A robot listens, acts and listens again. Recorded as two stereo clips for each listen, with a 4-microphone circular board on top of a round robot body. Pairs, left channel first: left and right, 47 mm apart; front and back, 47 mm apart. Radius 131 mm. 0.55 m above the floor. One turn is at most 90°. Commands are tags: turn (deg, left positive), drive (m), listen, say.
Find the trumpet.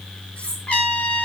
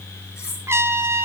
<turn deg="90"/>
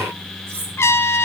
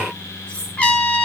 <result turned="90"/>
<turn deg="65"/>
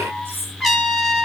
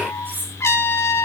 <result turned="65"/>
<say>Found it: a trumpet, straight ahead.</say>